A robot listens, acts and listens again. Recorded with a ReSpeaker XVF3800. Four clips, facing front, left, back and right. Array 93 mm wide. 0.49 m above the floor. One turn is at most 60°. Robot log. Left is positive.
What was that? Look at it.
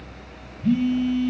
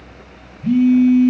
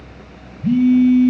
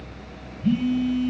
note: The phone buzzing: 95° left.
cmd yaw +60
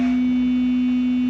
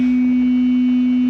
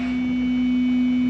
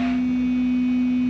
note: The phone buzzing is now 60° left.
cmd yaw +60
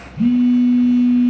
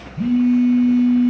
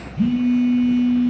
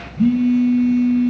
note: The phone buzzing is now 15° left.
cmd yaw +15
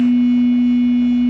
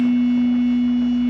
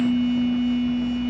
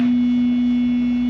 end: Found it: a phone buzzing, straight ahead.